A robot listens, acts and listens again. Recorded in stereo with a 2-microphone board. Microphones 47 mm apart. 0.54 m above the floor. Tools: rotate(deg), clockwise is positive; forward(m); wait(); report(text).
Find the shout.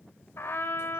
wait()
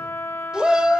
rotate(20)
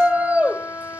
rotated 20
rotate(140)
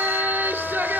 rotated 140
rotate(55)
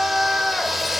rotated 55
report("Facing the shout, 1 to 2 m away.")